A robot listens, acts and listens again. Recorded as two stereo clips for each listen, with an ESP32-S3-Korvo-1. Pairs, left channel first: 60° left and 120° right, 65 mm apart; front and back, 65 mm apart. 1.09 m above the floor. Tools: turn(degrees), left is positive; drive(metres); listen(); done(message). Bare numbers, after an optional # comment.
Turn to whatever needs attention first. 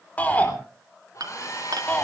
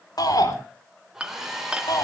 done("Facing the shout.")